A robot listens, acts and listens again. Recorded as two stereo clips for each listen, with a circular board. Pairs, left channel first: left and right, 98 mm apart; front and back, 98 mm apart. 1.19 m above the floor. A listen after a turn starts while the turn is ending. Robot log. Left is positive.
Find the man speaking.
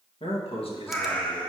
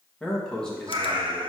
note: The man speaking: 80° left.
cmd yaw +80
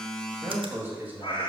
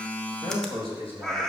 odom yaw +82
note: The man speaking is now 20° right.
cmd yaw -20
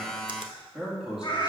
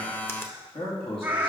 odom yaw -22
end: Facing the man speaking.